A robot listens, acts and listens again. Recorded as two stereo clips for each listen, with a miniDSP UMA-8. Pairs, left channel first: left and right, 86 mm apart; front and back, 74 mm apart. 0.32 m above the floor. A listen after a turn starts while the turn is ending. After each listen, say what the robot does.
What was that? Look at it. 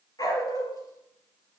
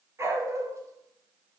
Turn 135° left.
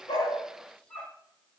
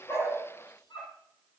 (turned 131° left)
Turn 15° left.
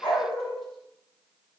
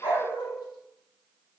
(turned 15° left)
Facing the dog barking, 2 to 4 m away.